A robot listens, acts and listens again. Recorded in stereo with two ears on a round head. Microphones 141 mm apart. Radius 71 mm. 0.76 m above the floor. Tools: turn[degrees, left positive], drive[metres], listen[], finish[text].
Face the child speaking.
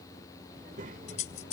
Thought: The child speaking: about 50° right or 130° right.
Action: turn[-50]
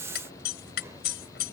Action: listen[]
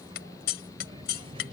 Thought: So it is at 35° right.
Action: turn[-35]
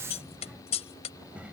Thought: The child speaking is now 10° right.
Action: turn[-10]
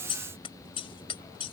Action: listen[]
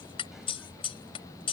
Action: listen[]
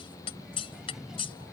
Action: finish[Found it: a child speaking, straight ahead.]